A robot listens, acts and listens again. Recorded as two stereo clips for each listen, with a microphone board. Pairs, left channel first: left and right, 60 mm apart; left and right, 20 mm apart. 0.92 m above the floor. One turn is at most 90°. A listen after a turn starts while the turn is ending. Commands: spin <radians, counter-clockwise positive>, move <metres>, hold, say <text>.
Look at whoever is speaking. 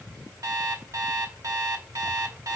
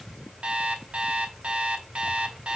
hold
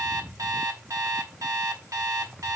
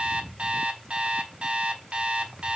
hold
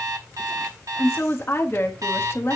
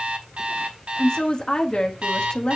spin 0.79
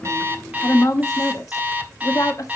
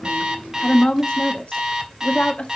spin 1.57
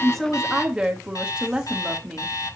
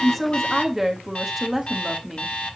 spin -0.26
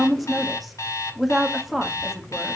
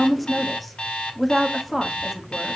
say Found it: a woman speaking, straight ahead.